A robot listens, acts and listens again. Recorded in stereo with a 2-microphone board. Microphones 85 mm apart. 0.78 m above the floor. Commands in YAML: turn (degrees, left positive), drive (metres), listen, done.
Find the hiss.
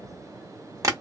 listen: true
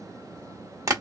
listen: true
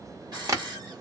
turn: -55
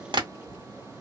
listen: true
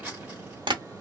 turn: -15
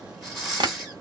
done: "Facing the hiss."